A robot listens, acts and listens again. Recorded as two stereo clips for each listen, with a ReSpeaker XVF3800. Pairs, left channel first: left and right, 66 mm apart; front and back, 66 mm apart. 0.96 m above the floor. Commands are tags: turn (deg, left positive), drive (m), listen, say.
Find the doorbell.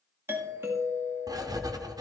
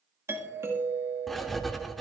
<turn deg="-135"/>
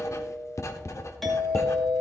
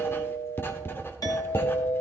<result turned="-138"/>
<say>Facing the doorbell, 2 to 4 m away.</say>